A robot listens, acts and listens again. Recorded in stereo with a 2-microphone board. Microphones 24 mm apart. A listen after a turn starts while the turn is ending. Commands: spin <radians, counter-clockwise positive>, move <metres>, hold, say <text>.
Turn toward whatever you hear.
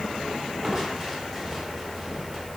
spin 0.52
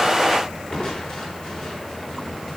spin 2.53
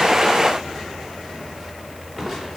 spin -0.26
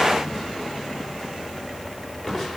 say Facing the crushing, over 4 m away.